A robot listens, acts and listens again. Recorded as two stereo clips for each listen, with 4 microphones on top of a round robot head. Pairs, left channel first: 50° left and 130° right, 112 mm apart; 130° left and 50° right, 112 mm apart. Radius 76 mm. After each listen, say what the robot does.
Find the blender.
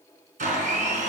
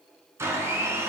Turn 115° right.
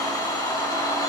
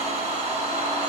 Turn 15° right.
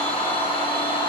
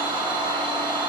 Found it: a blender, straight ahead.